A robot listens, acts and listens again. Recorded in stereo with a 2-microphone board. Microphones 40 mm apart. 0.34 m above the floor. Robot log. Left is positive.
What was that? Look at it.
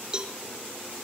note: The cowbell: about 20° right or 160° right.
cmd yaw -20
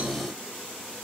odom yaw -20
cmd idle
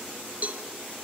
note: So it is at 140° right.
cmd yaw -140
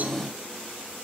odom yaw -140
cmd idle
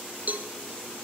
note: The cowbell is now 45° right.
cmd yaw -45
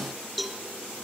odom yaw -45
end: Facing the cowbell.